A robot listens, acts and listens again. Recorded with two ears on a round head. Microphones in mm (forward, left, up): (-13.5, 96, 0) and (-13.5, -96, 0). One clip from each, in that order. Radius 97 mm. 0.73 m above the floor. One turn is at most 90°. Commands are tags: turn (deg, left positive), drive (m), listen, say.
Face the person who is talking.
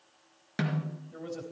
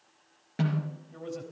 <turn deg="30"/>
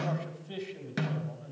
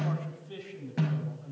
<turn deg="90"/>
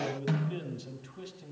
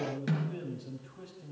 <turn deg="50"/>
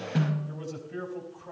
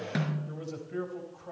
<say>Facing the man speaking, 2 to 4 m away.</say>